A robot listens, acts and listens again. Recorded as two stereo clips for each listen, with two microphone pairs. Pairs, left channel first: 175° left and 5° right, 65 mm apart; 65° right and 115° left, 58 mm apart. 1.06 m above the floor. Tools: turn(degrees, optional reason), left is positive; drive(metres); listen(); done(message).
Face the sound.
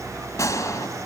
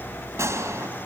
turn(degrees=140, reason="The gunshot: 140° left.")
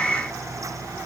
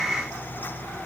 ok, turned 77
turn(degrees=65, reason="Nothing new. It was at 65° left.")
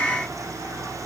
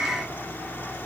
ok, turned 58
done("I heard a gunshot from this way, but can't make it out now.")